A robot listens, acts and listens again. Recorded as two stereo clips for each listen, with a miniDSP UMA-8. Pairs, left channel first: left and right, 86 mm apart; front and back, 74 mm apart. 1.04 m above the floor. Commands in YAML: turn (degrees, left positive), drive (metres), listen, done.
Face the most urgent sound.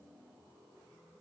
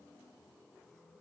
listen: true
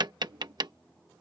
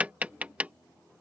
listen: true
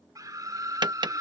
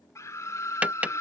turn: -45
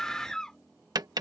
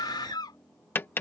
done: "Facing the scream."